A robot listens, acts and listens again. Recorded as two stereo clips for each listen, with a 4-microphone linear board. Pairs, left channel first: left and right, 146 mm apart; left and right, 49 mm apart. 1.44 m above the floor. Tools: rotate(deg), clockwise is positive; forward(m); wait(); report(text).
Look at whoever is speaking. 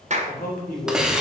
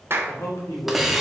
rotate(-90)
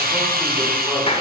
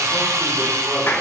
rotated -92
wait()
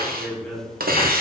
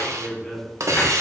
report("Facing the man speaking, 2 to 4 m away.")